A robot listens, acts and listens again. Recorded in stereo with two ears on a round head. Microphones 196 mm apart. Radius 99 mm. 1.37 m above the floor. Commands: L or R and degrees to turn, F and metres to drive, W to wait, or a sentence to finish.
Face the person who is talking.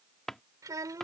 R15
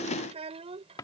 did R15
R30
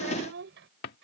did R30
R120
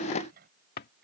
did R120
R45
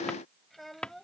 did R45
Facing the child speaking.